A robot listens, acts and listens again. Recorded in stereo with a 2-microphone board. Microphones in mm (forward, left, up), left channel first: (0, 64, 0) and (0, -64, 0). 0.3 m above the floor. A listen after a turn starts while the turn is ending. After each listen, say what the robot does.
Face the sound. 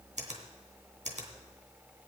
Turn 70° right.
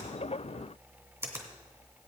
Turn 25° right.
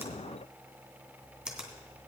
Turn 10° right.
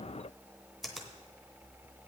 Found it: a finger snap, straight ahead.